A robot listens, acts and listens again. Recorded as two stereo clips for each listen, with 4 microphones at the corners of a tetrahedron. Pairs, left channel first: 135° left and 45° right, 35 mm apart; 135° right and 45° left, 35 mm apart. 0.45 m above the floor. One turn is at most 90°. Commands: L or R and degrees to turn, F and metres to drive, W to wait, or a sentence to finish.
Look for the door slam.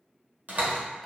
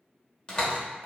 R70
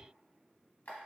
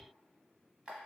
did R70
Facing where the door slam came from. I can't hear it now.